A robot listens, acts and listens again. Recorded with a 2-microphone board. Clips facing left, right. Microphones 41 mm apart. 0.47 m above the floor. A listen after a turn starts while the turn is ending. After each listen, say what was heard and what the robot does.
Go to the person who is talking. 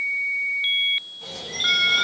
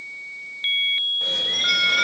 Keep listening.
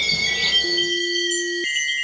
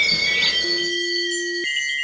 Keep listening.
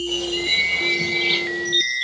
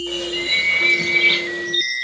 I can't make out anyone speaking, only a bird.